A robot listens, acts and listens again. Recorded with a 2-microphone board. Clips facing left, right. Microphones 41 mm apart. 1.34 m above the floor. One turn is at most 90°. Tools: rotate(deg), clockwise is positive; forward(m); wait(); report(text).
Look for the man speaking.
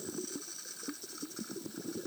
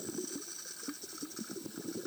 wait()
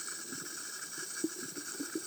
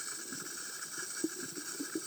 wait()
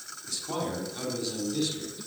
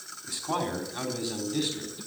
rotate(25)
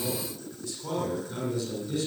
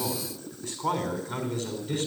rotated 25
rotate(90)
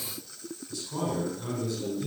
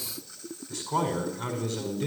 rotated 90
rotate(65)
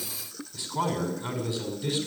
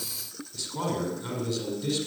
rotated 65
rotate(-20)
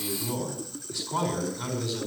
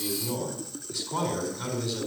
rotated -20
report("Facing the man speaking.")